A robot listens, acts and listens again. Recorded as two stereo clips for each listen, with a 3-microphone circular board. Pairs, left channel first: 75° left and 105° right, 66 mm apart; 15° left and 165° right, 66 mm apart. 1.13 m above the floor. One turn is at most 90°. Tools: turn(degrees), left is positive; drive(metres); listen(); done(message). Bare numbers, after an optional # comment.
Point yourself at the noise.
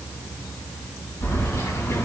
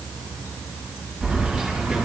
# The keys jangling: 110° left.
turn(90)
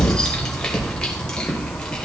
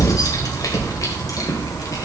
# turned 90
done("Facing the keys jangling.")